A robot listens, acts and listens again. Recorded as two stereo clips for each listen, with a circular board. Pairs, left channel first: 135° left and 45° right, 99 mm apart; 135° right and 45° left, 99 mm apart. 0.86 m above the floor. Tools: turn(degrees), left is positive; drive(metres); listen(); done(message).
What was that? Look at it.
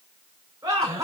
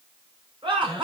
turn(degrees=10)
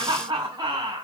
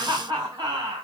done("Found it: laughter, straight ahead, 2 to 4 m away.")